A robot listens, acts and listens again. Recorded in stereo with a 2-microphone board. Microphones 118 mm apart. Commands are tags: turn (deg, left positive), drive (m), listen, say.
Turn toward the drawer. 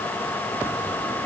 <listen/>
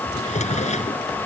<turn deg="90"/>
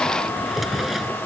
<say>Facing the drawer.</say>